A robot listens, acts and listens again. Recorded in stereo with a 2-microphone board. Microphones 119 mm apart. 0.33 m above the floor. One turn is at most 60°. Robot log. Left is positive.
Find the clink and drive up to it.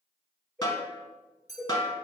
note: The clink: about 75° left or 105° left.
cmd yaw +60
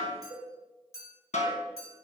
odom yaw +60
note: So it is at 25° left.
cmd yaw +25
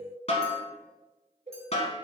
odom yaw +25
cmd idle
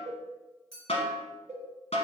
cmd fwd 1.0
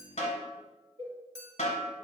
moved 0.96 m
cmd fwd 1.0
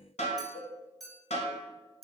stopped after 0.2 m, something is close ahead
end: Arrived at the clink, straight ahead.